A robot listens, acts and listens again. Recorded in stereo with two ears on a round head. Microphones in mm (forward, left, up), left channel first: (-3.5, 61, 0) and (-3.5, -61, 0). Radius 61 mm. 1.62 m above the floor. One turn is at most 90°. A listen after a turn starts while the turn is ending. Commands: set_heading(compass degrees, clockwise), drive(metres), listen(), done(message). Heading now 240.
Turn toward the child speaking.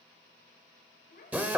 set_heading(170)
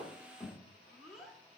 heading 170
done("Found it: a child speaking, straight ahead.")